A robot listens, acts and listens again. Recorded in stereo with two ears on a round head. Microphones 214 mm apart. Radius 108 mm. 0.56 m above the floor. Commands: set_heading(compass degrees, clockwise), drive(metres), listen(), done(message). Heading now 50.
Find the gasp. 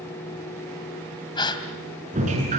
set_heading(30)
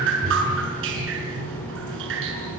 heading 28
listen()
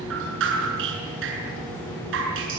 done("I heard a gasp, but can't make it out now. It was about 5° right or 140° left.")